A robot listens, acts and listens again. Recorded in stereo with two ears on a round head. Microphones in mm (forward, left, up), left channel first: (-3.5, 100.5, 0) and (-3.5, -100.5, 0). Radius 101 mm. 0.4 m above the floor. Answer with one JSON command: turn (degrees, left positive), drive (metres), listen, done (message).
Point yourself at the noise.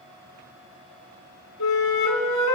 {"turn": 90}
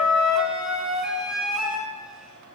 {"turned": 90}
{"done": "Facing the flute."}